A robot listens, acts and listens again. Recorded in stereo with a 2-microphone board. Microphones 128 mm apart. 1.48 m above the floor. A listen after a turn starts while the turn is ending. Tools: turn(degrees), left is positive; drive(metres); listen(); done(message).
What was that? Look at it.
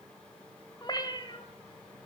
turn(degrees=40)
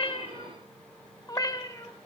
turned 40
turn(degrees=25)
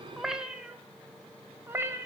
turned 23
turn(degrees=-20)
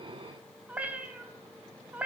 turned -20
turn(degrees=-10)
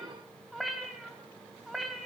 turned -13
done("Found it: a cat meowing, straight ahead.")